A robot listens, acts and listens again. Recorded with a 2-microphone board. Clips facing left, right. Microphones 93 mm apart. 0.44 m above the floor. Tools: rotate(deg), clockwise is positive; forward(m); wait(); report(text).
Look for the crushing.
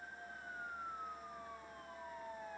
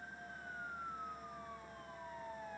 wait()
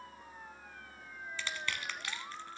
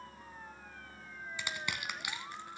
rotate(30)
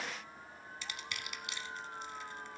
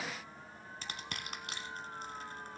rotate(135)
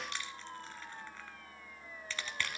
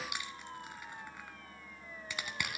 rotate(15)
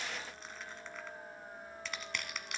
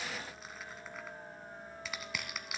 report("Found it: crushing, straight ahead.")